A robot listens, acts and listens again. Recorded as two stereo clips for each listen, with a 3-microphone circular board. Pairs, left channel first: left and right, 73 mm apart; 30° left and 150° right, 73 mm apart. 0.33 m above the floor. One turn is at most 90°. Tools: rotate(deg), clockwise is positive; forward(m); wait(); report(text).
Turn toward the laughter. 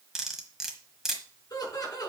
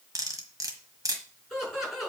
rotate(-90)
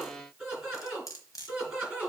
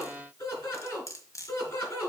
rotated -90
rotate(10)
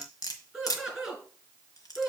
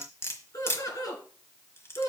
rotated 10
report("Found it: laughter, straight ahead.")